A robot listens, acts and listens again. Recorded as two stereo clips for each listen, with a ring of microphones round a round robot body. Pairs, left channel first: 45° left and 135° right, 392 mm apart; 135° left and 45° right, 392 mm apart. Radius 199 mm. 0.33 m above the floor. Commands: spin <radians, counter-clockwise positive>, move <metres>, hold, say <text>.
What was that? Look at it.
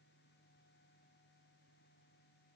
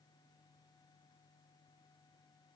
hold
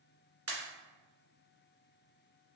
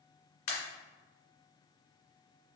spin 2.97
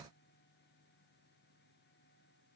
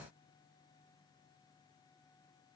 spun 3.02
say Facing where the pop came from. I can't hear it now.